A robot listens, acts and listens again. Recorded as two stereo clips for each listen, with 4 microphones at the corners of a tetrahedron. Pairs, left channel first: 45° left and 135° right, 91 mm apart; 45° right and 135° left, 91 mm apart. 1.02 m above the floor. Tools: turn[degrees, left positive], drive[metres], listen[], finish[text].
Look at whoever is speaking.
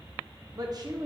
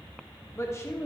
Thought: The woman speaking: 100° right.
Action: turn[-100]
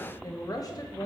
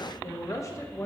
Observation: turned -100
Action: finish[Found it: a woman speaking, straight ahead, under 1 m away.]